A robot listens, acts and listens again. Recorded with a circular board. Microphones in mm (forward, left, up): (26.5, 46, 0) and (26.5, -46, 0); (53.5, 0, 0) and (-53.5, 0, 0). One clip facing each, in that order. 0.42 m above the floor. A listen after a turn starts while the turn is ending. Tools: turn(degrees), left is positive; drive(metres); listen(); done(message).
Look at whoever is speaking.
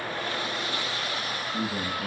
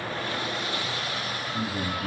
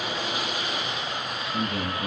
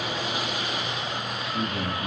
turn(degrees=45)
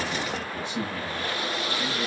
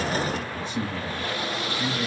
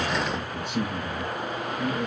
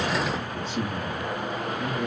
turn(degrees=15)
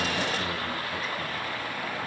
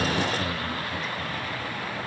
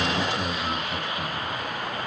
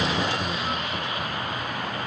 listen()
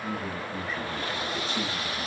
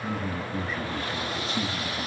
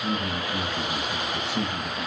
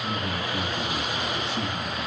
done("Facing the man speaking.")